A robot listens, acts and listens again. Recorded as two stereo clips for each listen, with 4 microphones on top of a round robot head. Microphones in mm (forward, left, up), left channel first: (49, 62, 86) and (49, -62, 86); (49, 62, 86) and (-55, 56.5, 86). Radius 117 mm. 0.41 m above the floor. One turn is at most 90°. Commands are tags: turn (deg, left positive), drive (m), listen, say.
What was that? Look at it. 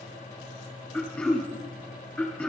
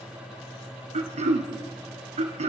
<turn deg="90"/>
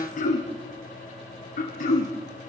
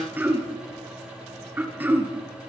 <turn deg="90"/>
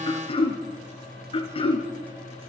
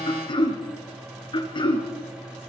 <turn deg="45"/>
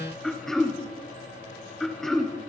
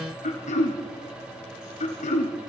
<say>Found it: throat clearing, straight ahead.</say>